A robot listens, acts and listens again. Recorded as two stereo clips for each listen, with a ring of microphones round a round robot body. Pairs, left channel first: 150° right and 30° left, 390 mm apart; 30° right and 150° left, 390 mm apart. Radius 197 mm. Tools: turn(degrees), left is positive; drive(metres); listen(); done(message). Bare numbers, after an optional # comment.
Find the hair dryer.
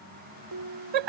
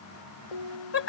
listen()
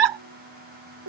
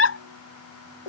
listen()
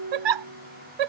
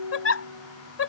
done("I can't make out a hair dryer to turn to.")